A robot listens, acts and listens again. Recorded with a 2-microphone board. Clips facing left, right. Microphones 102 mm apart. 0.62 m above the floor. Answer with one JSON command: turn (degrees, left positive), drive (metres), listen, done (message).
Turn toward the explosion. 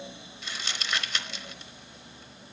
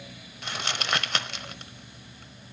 {"listen": true}
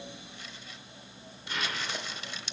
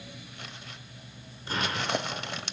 {"turn": -40}
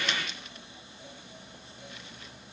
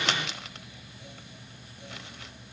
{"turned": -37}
{"listen": true}
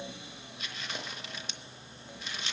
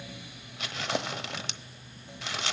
{"done": "I heard an explosion, but can't make it out now. It was about 5° right or 100° right."}